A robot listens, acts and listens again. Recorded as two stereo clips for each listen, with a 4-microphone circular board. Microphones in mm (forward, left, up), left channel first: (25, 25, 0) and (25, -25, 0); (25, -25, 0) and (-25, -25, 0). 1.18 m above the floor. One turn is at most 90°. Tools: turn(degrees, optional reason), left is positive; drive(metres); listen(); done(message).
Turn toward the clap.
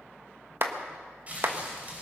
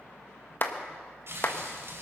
turn(degrees=-45, reason="The clap: 45° right.")
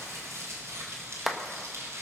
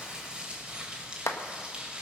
done("Found it: a clap, straight ahead.")